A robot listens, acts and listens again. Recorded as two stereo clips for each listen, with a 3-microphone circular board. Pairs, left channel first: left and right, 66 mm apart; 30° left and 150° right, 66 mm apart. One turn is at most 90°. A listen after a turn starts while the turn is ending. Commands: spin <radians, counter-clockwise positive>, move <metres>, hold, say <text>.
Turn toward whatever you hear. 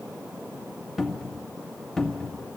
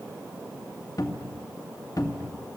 say Facing the cupboard door, 1 to 2 m away.